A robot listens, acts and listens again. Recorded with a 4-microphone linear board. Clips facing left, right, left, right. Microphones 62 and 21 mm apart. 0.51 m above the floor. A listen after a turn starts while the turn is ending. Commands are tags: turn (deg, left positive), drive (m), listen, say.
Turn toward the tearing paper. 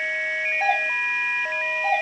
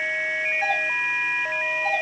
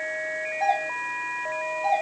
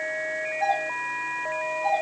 <listen/>
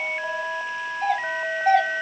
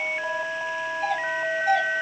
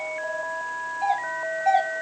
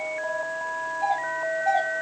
<listen/>
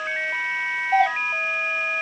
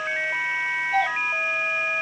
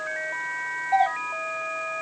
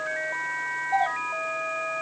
<say>I can't make out tearing paper to turn to.</say>